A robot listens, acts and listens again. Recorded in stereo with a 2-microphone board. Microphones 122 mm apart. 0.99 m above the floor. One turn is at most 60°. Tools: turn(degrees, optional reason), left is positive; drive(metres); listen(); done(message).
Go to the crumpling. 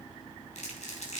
turn(degrees=60, reason="The crumpling: about 70° left or 110° left.")
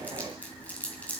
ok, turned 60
turn(degrees=10, reason="So it is at 10° left.")
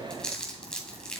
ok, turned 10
drive(metres=1.0)
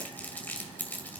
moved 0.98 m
turn(degrees=15, reason="The crumpling is now 15° left.")
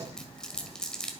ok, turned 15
drive(metres=1.0)
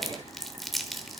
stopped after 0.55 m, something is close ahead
done("I am next to the crumpling.")